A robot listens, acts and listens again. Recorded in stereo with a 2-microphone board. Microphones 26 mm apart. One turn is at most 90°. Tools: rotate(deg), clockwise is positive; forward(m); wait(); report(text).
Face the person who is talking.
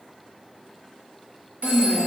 rotate(25)
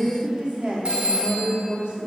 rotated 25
rotate(90)
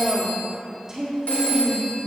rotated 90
rotate(20)
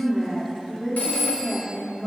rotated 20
report("Found it: a woman speaking, straight ahead, 1 to 2 m away.")